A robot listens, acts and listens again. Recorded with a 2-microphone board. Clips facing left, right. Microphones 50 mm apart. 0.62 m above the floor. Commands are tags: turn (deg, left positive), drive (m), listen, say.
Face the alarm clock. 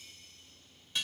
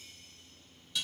<listen/>
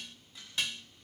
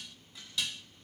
<listen/>
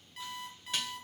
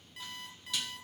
<turn deg="30"/>
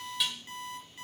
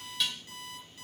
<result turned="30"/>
<turn deg="145"/>
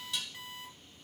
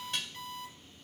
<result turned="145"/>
<turn deg="10"/>
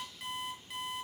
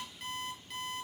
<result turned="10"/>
<say>Facing the alarm clock, over 4 m away.</say>